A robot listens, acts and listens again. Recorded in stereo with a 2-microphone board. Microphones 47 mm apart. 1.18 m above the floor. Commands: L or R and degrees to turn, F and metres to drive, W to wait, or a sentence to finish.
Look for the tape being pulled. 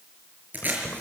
R40
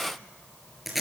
Facing the tape being pulled, over 4 m away.